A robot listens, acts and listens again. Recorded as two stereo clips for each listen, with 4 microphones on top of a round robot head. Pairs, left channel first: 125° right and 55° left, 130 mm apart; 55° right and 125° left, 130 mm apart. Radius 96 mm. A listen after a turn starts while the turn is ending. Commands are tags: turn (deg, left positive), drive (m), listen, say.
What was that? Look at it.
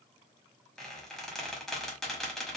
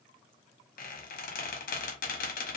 <turn deg="-35"/>
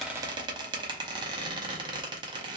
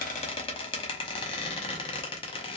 <say>Found it: a squeak, straight ahead.</say>